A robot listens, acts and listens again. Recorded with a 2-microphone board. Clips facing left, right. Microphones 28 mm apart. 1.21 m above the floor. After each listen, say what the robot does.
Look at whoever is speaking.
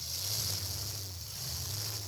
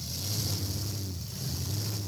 Keep listening.
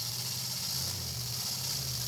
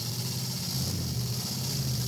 Keep listening.
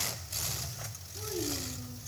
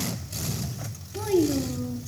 Turn 70° right.
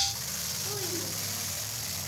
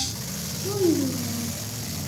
Found it: a child speaking, straight ahead.